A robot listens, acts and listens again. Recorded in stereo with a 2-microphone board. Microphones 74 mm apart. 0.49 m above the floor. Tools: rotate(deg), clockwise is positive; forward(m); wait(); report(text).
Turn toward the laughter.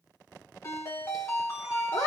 rotate(-45)
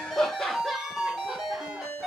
report("Facing the laughter.")